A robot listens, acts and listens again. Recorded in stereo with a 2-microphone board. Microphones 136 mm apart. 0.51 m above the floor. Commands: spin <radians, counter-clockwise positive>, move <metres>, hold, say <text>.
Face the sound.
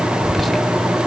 spin 0.52
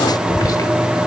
spin 2.62
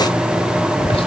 spin 0.87
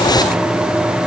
say Facing the whispering.